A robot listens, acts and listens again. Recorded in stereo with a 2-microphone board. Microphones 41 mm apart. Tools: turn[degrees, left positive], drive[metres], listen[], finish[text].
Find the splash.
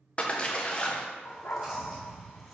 Thought: The splash: about 30° left or 150° left.
Action: turn[30]
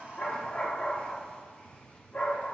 Action: listen[]
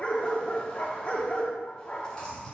Action: finish[I heard a splash, but can't make it out now. It was about straight ahead or 120° left.]